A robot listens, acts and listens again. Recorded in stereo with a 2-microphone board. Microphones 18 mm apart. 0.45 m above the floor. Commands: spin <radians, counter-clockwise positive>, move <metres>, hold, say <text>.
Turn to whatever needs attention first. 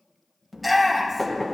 spin 0.52
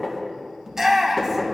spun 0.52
spin -0.52
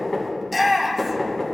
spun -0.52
say Facing the shout, 2 to 4 m away.